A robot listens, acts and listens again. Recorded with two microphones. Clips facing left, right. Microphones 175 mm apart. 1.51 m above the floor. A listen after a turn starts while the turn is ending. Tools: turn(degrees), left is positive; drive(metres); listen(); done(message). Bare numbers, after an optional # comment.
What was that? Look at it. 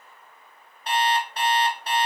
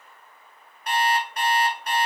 # The alarm clock: about 30° left or 150° left.
turn(30)
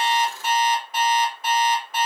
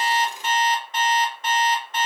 done("Found it: an alarm clock, straight ahead, 2 to 4 m away.")